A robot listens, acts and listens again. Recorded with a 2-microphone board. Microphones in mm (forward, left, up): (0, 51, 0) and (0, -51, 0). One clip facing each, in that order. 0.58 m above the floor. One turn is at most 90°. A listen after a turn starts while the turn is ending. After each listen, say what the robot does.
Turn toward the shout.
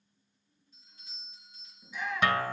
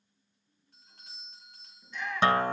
Turn 30° left.
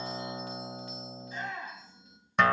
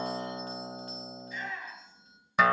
Turn 90° left.
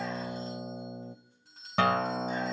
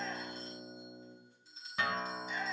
Turn 55° left.
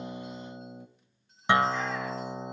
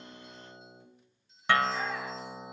Keep listening.
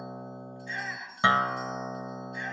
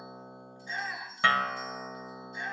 Turn 15° right.
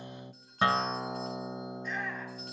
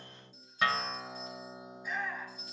Found it: a shout, straight ahead.